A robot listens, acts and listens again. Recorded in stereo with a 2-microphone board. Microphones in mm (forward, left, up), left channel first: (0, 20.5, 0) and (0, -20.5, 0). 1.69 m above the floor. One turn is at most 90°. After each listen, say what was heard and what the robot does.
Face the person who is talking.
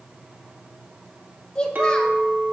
The child speaking: about 25° left or 155° left. Turn 25° left.
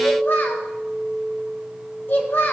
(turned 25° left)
So it is at 130° left. Turn 90° left.
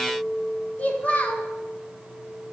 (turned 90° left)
The child speaking is now 35° left. Turn 35° left.
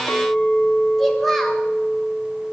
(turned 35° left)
Found it: a child speaking, straight ahead.